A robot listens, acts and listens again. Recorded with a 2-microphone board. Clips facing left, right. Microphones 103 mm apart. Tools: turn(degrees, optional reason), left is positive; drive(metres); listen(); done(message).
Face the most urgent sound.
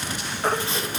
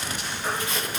turn(degrees=65, reason="The baby crying: about 65° left or 115° left.")
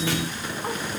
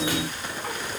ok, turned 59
listen()
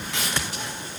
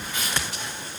listen()
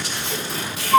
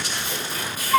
turn(degrees=20, reason="So it is at 20° left.")
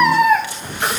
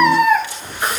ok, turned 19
done("Found it: a baby crying, straight ahead.")